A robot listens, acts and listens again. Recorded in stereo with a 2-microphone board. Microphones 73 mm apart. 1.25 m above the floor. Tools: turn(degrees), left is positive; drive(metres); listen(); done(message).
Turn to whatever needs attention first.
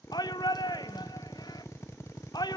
turn(degrees=70)
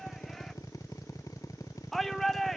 done("Found it: a shout, straight ahead.")